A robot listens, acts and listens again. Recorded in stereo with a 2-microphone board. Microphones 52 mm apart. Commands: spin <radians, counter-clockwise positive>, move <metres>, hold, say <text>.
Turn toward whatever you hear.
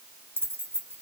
spin -0.79
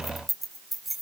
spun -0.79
say Found it: keys jangling, straight ahead.